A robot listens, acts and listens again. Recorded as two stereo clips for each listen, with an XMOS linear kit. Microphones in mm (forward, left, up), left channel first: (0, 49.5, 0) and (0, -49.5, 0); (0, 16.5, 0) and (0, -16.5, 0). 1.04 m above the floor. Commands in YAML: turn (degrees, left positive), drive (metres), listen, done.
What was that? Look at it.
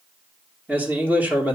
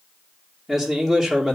turn: -15
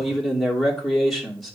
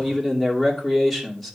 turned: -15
done: "Found it: a man speaking, straight ahead, 2 to 4 m away."